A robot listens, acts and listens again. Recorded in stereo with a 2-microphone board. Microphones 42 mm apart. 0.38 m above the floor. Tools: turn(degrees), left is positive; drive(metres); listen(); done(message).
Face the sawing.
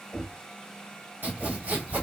turn(degrees=-50)
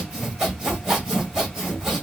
turn(degrees=-15)
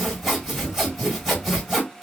done("Found it: sawing, straight ahead.")